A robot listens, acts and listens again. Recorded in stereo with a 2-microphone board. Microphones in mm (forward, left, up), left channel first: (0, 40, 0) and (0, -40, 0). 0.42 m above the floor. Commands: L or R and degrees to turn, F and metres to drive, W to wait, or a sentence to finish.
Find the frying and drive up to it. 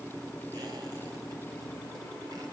W
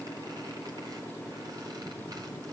W
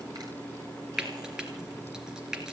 R30
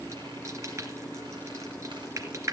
R140
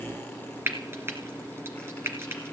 R30
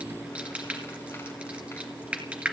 R15
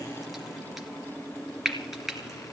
F1.0
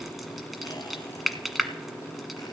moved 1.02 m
F1.0
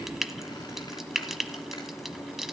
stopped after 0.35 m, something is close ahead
Arrived at the frying, straight ahead.